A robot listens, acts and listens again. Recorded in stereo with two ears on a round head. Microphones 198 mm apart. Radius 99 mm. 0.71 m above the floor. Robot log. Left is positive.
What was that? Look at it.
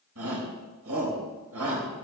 cmd yaw -90
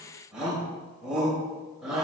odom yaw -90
end: Found it: a shout, straight ahead, over 4 m away.